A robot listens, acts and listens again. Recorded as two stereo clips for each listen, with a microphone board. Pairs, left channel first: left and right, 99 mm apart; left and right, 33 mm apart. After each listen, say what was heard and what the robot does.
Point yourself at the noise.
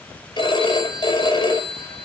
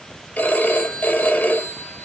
The phone ringing: about 50° left or 130° left. Turn 50° left.
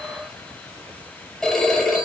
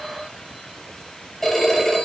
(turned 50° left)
Found it: a phone ringing, straight ahead.